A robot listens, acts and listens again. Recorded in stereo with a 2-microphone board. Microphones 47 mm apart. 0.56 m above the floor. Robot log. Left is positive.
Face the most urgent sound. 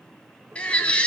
note: The baby crying: about 25° left or 155° left.
cmd yaw +25
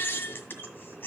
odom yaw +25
note: So it is at 130° left.
cmd yaw +130
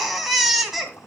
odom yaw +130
end: Found it: a baby crying, straight ahead, 2 to 4 m away.